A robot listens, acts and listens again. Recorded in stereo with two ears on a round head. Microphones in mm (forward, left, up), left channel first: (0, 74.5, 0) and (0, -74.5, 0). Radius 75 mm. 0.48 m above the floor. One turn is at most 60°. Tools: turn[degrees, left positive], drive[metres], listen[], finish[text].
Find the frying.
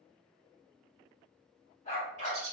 Action: listen[]
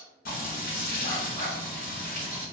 Thought: The frying: about 65° left or 115° left.
Action: turn[60]
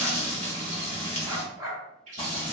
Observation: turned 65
Thought: So it is at 45° left.
Action: turn[45]
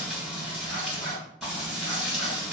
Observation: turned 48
Action: finish[Found it: frying, straight ahead, 1 to 2 m away.]